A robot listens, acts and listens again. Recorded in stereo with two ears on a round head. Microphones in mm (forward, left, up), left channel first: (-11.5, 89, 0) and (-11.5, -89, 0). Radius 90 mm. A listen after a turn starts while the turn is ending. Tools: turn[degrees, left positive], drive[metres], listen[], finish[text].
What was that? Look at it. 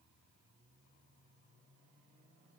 Action: listen[]
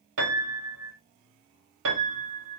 Thought: The piano: about 65° right or 115° right.
Action: turn[-65]
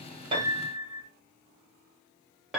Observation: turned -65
Action: finish[Facing the piano.]